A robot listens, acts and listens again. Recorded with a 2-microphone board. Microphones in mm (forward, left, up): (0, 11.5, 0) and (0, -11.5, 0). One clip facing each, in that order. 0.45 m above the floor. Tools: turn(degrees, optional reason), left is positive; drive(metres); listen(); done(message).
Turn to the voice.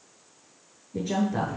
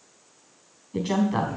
turn(degrees=-75, reason="The woman speaking: about 75° right or 105° right.")
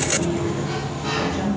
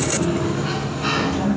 turn(degrees=-20, reason="So it is at 20° right.")
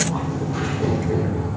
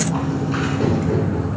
listen()
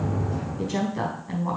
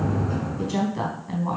done("Facing the woman speaking.")